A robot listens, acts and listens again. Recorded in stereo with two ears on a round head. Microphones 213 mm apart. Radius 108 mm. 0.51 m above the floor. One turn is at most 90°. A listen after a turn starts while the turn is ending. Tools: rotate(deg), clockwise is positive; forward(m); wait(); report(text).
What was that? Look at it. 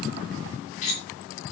rotate(-30)
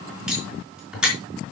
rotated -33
report("Found it: cutlery clinking, straight ahead, over 4 m away.")